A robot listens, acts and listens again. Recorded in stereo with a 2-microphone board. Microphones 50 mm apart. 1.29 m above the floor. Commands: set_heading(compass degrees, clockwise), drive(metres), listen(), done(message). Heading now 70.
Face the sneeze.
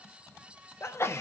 set_heading(10)
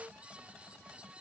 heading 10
listen()
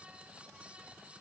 done("I heard a sneeze, but can't make it out now. It was about straight ahead or 60° left.")